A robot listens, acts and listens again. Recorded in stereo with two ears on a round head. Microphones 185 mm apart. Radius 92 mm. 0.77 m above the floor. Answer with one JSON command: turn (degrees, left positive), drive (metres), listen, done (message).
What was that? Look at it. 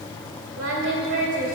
{"turn": -55}
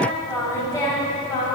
{"turn": 20}
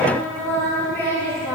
{"turn": 15}
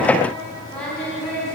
{"done": "Found it: singing, straight ahead, over 4 m away."}